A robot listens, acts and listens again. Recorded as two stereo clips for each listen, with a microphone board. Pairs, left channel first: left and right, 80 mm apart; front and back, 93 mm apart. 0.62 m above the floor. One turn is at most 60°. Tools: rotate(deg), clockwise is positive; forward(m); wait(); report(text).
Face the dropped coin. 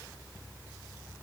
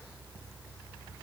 wait()
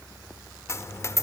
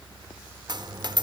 rotate(-60)
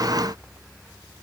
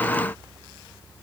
rotate(-60)
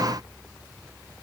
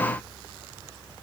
rotate(-25)
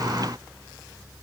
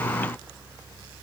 report("I heard a dropped coin from this way, but can't make it out now.")